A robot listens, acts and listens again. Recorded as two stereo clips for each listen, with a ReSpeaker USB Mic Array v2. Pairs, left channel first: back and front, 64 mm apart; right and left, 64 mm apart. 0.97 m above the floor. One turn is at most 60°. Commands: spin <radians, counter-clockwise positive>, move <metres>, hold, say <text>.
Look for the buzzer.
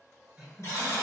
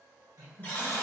spin -1.05
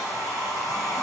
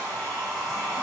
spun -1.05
spin -1.05
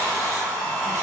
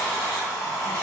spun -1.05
spin -0.52
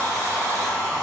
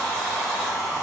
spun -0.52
say I heard a buzzer from this way, but can't make it out now.